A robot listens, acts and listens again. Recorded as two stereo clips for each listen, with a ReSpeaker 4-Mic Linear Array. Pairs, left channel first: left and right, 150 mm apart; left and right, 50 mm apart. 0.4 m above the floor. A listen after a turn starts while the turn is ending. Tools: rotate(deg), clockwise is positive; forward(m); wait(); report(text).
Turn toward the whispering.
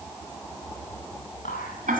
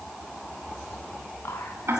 rotate(-70)
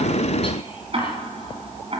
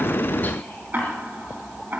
wait()
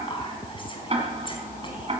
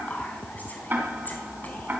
rotate(-35)
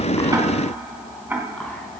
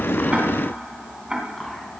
wait()
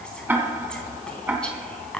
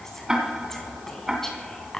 report("Found it: whispering, straight ahead, 2 to 4 m away.")